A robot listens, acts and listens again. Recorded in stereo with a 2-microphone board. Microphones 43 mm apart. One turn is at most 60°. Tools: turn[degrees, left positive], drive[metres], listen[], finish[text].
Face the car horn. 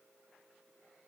Action: listen[]
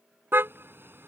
Thought: The car horn: about 65° right or 115° right.
Action: turn[-60]
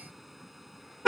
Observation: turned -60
Action: finish[Found it: a car horn, straight ahead.]